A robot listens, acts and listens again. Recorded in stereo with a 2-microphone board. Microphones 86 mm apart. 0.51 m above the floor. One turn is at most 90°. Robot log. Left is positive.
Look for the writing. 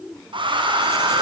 cmd idle
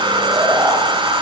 cmd idle
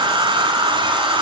end: I can't make out writing to turn to.